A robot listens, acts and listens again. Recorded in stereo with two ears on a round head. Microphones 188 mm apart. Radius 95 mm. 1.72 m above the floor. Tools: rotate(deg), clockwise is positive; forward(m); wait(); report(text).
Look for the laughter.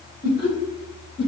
rotate(-45)
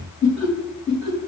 report("Found it: laughter, straight ahead.")